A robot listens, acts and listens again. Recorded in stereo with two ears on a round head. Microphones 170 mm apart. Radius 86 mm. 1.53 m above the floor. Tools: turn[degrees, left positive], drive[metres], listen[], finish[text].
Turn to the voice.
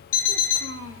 Thought: The child speaking: about 75° right or 105° right.
Action: turn[-75]
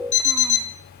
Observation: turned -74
Action: listen[]
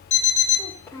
Thought: So it is at 15° left.
Action: turn[15]
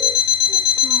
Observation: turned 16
Action: listen[]
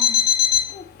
Thought: The child speaking is now 20° left.
Action: turn[20]
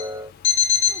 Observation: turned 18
Action: listen[]
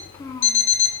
Thought: The child speaking is now 10° left.
Action: turn[10]
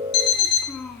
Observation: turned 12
Action: finish[Found it: a child speaking, straight ahead.]